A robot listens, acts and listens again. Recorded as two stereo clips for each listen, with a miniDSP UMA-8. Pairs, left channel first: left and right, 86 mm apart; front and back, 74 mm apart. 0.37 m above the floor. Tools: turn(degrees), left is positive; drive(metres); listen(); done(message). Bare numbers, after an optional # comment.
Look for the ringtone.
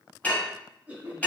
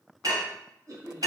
listen()
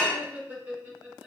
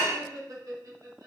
listen()
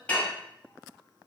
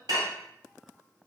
done("I can't make out a ringtone to turn to.")